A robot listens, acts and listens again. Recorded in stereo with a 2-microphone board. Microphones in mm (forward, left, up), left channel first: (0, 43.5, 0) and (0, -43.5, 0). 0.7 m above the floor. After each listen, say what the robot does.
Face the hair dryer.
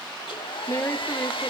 Turn 90° left.
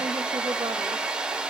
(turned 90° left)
Turn 10° right.
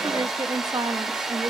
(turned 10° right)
Found it: a hair dryer, straight ahead, 1 to 2 m away.